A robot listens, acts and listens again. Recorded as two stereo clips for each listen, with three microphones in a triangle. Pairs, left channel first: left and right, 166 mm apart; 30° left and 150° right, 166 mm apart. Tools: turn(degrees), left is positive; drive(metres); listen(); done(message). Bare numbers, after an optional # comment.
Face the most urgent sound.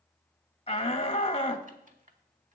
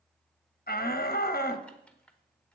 # The shout: 40° left.
turn(40)
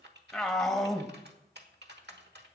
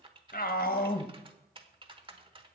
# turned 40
done("Facing the shout, under 1 m away.")